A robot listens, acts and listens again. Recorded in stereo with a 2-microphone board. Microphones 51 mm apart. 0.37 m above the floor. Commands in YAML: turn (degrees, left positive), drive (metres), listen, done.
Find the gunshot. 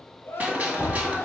turn: -30
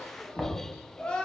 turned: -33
listen: true
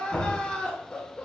done: "I heard a gunshot, but can't make it out now. It was about 5° left or 115° right."